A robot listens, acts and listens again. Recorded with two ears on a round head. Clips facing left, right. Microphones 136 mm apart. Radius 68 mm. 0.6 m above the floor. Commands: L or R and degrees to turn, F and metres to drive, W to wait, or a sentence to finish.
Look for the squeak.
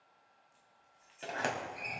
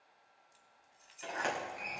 W
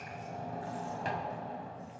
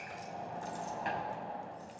W
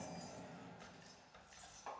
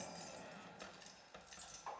R60
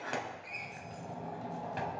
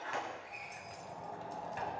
W
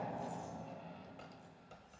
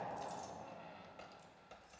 Facing the squeak, under 1 m away.